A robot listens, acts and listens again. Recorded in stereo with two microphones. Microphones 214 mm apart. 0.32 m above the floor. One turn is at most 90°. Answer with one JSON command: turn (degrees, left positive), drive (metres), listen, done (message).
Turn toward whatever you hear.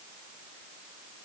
{"listen": true}
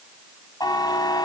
{"turn": 20}
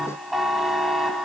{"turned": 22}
{"done": "Found it: a buzzer, straight ahead, 1 to 2 m away."}